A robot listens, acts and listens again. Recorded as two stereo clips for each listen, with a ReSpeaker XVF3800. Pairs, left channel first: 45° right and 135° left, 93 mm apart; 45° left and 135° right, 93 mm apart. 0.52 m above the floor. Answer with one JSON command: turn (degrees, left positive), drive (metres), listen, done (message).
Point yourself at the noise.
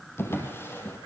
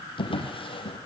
{"turn": 20}
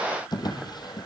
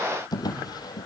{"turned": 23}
{"done": "Facing the drawer, over 4 m away."}